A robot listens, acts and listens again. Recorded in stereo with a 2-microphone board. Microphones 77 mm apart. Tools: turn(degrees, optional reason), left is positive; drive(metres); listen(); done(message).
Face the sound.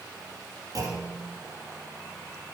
turn(degrees=-55, reason="The clunk: about 55° right or 125° right.")
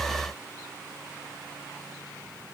listen()
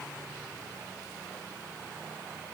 done("I heard a clunk, but can't make it out now. It was about straight ahead or 70° right.")